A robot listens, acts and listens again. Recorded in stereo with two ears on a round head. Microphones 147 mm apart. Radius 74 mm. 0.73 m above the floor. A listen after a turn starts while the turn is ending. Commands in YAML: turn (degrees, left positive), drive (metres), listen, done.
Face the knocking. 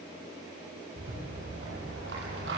listen: true
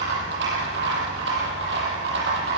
listen: true
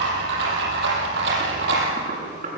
turn: -50
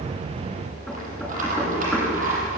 listen: true
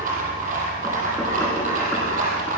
listen: true
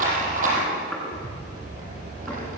done: "I heard knocking, but can't make it out now. It was about straight ahead or 80° right."